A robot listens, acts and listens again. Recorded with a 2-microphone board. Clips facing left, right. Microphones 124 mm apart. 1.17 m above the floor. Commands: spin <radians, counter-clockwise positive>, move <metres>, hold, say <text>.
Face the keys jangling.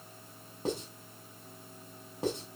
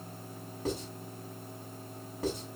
hold
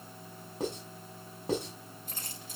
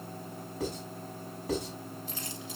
spin 0.79
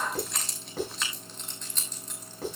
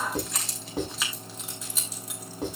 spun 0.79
spin -0.17
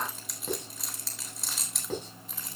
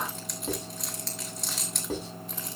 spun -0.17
say Found it: keys jangling, straight ahead.